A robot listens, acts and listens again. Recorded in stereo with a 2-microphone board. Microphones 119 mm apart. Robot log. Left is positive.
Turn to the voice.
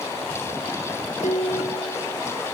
cmd idle
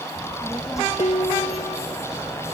note: The child speaking: about 25° left or 155° left.
cmd yaw +25
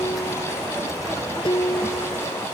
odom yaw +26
cmd idle
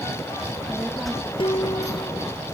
end: Found it: a child speaking, straight ahead.